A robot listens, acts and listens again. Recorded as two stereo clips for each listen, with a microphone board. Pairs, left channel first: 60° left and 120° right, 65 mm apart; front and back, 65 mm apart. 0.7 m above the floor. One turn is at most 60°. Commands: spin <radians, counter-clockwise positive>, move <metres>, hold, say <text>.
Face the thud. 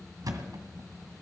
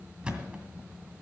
spin -1.05
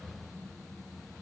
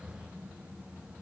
spin -0.79
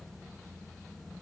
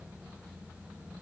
say Facing where the thud came from. I can't hear it now.